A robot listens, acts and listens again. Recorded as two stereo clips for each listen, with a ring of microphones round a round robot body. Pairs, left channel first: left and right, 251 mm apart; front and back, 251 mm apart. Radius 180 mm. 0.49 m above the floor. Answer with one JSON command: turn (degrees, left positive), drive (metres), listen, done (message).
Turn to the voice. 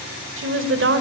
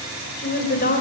{"turn": -60}
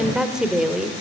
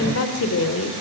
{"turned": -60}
{"done": "Facing the woman speaking."}